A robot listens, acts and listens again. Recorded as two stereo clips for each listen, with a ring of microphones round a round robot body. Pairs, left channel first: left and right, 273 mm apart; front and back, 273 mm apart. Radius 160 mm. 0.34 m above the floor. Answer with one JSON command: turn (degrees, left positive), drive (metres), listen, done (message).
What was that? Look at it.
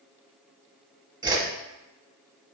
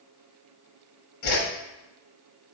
{"turn": -15}
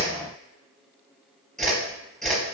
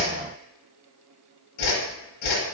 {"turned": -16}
{"done": "Found it: a whoosh, straight ahead."}